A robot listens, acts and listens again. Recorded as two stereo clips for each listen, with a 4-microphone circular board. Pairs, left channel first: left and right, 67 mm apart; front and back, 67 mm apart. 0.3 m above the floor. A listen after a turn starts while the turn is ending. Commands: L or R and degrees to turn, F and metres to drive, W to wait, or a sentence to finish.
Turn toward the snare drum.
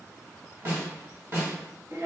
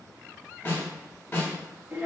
R45
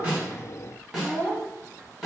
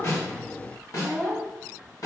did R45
Found it: a snare drum, straight ahead, 1 to 2 m away.